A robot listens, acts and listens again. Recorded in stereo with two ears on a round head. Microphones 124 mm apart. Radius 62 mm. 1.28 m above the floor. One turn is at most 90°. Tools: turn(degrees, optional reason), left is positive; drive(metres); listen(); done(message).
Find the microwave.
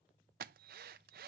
listen()
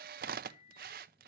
turn(degrees=60, reason="The microwave: about 60° left or 120° left.")
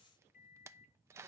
turn(degrees=55, reason="So it is at 55° left.")
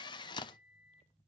done("Facing the microwave.")